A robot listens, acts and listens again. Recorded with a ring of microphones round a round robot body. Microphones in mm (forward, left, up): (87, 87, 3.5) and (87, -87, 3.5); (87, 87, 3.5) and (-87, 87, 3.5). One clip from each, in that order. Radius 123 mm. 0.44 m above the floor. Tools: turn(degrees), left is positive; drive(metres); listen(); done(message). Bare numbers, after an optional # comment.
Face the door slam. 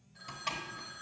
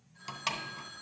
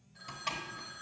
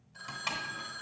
# The door slam: 95° right.
turn(-95)
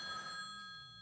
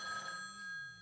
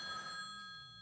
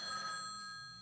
done("I heard a door slam from this way, but can't make it out now.")